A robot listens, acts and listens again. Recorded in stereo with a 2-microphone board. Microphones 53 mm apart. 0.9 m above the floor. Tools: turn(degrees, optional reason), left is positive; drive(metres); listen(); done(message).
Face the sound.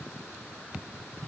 listen()
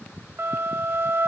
turn(degrees=-50, reason="The flute: about 50° right or 130° right.")
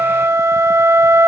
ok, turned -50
turn(degrees=-75, reason="So it is at 75° right.")
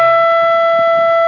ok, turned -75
done("Found it: a flute, straight ahead.")